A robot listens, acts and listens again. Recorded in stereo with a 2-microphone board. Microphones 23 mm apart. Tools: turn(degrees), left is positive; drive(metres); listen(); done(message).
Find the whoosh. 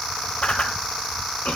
turn(degrees=50)
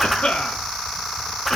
done("Found it: a whoosh, straight ahead.")